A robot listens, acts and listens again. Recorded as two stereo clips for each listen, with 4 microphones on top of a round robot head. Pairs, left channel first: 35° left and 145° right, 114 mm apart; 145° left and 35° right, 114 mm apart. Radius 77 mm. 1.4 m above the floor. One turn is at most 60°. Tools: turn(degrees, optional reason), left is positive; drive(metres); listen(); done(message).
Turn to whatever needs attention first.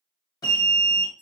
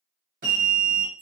turn(degrees=25, reason="The alarm: 25° left.")
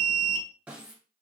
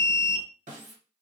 turn(degrees=-20, reason="The alarm is now 20° right.")
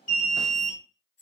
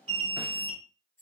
done("Found it: an alarm, straight ahead.")